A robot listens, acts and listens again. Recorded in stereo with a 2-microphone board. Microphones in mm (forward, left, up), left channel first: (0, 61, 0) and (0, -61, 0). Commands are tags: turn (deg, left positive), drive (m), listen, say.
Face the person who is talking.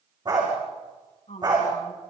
<turn deg="65"/>
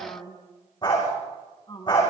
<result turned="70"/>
<turn deg="35"/>
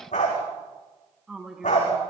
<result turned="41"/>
<say>Facing the woman speaking.</say>